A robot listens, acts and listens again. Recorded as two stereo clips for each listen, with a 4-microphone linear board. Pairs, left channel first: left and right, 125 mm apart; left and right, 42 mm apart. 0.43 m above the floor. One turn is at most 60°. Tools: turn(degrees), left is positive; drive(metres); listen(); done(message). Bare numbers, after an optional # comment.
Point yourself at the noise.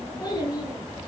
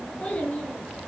# The child speaking: about 30° left or 150° left.
turn(30)
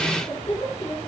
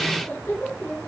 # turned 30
# So it is at 120° left.
turn(60)
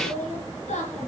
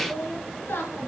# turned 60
# The child speaking is now 65° left.
turn(60)
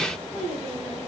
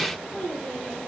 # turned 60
# The child speaking is now 25° left.
turn(25)
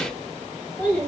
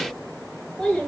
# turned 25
# The child speaking is now 15° left.
turn(15)
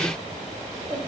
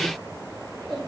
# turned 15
done("Facing the child speaking, over 4 m away.")